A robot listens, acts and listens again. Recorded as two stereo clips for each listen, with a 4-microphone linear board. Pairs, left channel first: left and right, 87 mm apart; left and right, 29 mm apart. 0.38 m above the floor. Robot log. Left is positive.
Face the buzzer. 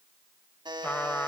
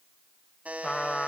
note: The buzzer: about 65° right or 115° right.
cmd yaw -65
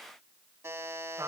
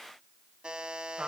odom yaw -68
note: So it is at 35° right.
cmd yaw -35
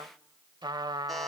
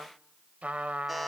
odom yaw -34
cmd idle
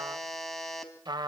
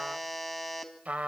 end: Found it: a buzzer, straight ahead.